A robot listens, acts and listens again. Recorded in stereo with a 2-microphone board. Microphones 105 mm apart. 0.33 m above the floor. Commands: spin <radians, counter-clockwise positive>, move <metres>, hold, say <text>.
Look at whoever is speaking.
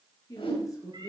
spin 0.61
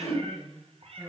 say Found it: a woman speaking, straight ahead, over 4 m away.